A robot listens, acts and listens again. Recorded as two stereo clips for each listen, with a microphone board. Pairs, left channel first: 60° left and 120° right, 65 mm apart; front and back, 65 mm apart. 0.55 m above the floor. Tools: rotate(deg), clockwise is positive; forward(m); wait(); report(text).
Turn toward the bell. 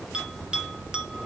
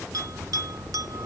rotate(-165)
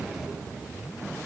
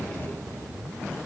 wait()
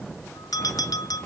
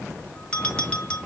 rotate(-70)
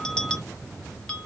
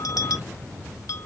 rotate(15)
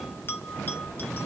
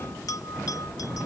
report("Found it: a bell, straight ahead, under 1 m away.")